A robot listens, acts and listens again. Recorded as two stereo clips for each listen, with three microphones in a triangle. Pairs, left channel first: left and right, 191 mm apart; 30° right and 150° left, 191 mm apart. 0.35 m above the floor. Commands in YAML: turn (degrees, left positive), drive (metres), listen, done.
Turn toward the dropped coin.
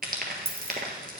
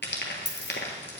turn: -10
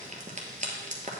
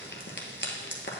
done: "Facing where the dropped coin came from. I can't hear it now."